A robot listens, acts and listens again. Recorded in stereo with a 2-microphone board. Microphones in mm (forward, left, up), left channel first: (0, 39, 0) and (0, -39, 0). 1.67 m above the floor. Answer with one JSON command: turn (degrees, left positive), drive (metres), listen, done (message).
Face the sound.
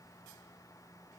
{"listen": true}
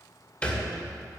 {"turn": 20}
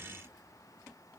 {"listen": true}
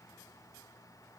{"done": "I heard a thud, but can't make it out now. It was about straight ahead or 140° left."}